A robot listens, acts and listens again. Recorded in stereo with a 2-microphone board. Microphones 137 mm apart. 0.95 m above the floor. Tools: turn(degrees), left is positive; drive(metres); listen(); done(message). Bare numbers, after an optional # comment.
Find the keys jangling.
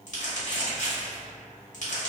listen()
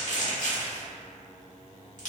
listen()
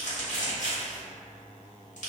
done("I can't make out keys jangling to turn to.")